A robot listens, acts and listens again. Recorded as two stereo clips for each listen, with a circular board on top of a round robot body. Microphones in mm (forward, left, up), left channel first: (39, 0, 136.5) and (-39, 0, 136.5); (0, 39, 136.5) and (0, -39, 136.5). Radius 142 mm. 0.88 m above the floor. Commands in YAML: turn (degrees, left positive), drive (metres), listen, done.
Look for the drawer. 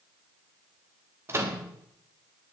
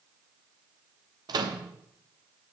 listen: true
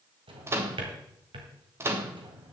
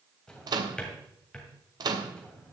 turn: 170
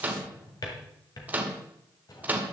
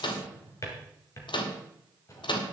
turn: 40
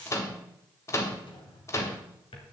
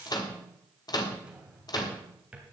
turn: -15
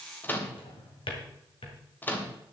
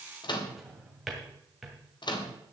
done: "Found it: a drawer, straight ahead, 2 to 4 m away."